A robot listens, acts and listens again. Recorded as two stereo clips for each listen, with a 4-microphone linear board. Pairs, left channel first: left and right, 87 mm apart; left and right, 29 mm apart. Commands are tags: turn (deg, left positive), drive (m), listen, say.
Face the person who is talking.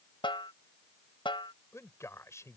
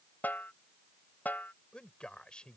<turn deg="35"/>
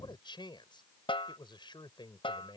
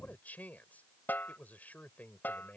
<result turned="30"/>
<turn deg="115"/>
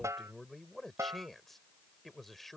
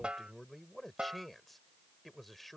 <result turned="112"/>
<say>Found it: a man speaking, straight ahead.</say>